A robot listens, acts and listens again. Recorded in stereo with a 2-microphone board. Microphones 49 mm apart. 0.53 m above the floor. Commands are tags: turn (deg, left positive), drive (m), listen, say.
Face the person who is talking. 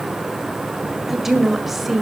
<turn deg="-30"/>
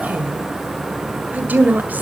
<turn deg="-140"/>
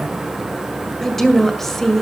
<turn deg="10"/>
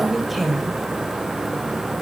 <say>Facing the woman speaking.</say>